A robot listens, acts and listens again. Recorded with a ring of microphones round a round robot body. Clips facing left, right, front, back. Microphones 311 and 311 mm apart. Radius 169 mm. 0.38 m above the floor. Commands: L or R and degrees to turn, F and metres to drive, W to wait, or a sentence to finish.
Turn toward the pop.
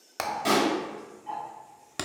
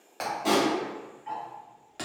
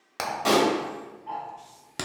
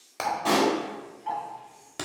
L35
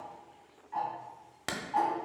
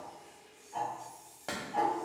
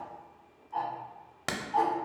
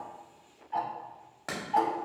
I heard a pop from this way, but can't make it out now.